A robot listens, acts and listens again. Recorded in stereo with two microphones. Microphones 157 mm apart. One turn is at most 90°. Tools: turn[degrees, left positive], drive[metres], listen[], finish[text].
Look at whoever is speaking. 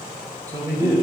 Thought: The man speaking: about 20° right or 160° right.
Action: turn[-20]
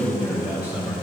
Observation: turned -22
Action: turn[-30]
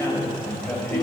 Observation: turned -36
Thought: So it is at 10° left.
Action: turn[10]
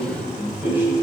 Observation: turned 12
Thought: The man speaking is now 10° right.
Action: turn[-10]
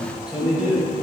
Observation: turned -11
Thought: The man speaking is now 10° right.
Action: turn[-10]
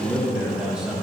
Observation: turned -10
Action: finish[Facing the man speaking.]